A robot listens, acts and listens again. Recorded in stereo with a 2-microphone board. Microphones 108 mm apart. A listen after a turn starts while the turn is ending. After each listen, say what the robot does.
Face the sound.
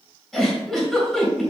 Turn 30° left.
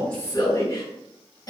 Turn 145° left.
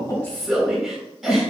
Found it: a giggle, straight ahead, 2 to 4 m away.